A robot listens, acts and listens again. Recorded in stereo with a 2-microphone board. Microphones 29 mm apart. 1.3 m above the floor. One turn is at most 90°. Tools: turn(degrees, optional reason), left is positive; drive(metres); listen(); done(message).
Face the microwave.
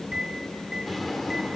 turn(degrees=-20, reason="The microwave: about 20° right or 160° right.")
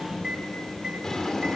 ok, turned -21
turn(degrees=-90, reason="So it is at 140° right.")
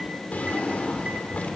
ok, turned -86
turn(degrees=-55, reason="Nothing new. It was at 55° right.")
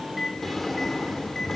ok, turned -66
turn(degrees=10, reason="The microwave is now 10° left.")
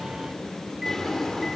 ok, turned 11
listen()
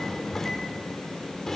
listen()
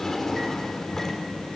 done("I heard a microwave from this way, but can't make it out now.")